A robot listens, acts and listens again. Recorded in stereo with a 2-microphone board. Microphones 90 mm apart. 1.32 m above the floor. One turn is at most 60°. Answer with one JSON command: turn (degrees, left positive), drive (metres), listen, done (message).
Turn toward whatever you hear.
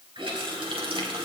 {"turn": -60}
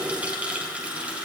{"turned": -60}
{"turn": -15}
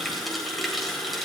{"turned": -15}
{"done": "Found it: a running tap, straight ahead, 2 to 4 m away."}